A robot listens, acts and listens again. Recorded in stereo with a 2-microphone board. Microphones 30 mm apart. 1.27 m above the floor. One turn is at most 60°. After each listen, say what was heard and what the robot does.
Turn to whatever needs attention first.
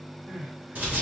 The crying: about 30° right or 150° right. Turn 30° right.
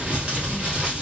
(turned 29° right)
Keep listening.
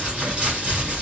Keep listening.
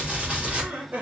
So it is at 120° right. Turn 60° right.
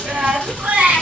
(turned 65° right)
The crying is now 55° right. Turn 55° right.
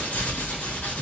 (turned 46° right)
Nothing new. It was at 10° right. Turn 10° right.
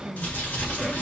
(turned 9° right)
Found it: crying, straight ahead, 2 to 4 m away.